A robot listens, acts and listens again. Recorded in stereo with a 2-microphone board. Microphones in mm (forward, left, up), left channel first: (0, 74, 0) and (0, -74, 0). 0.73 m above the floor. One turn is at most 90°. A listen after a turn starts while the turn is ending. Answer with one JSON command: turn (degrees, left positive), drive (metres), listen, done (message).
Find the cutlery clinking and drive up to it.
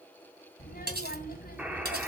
{"turn": -90}
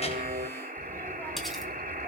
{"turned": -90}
{"listen": true}
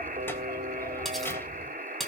{"drive": 1.0}
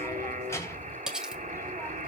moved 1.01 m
{"drive": 1.0}
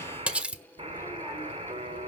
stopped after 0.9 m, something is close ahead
{"done": "Arrived at the cutlery clinking, straight ahead."}